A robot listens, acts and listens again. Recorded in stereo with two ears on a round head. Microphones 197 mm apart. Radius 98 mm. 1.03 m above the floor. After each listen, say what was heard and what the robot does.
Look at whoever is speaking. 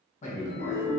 The man speaking: about 30° left or 150° left. Turn 30° left.
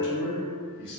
So it is at 115° left. Turn 115° left.
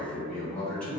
Facing the man speaking.